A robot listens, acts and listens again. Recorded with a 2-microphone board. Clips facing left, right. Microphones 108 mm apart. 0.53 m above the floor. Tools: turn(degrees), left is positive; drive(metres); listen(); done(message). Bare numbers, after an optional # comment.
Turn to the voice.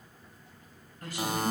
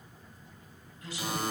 # The woman speaking: about 50° left or 130° left.
turn(50)
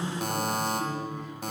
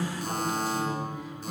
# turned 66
# So it is at 10° right.
turn(-10)
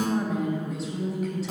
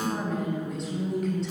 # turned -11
done("Facing the woman speaking, 2 to 4 m away.")